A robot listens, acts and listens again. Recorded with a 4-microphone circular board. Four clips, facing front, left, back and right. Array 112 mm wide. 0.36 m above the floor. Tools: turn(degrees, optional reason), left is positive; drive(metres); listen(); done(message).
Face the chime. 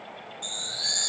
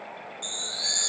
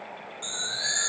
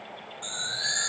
turn(degrees=-130, reason="The chime: 130° right.")
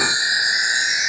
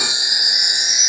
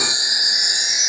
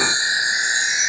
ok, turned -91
turn(degrees=-40, reason="The chime is now 40° right.")
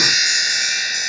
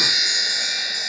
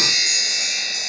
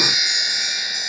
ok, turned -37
done("Found it: a chime, straight ahead, 1 to 2 m away.")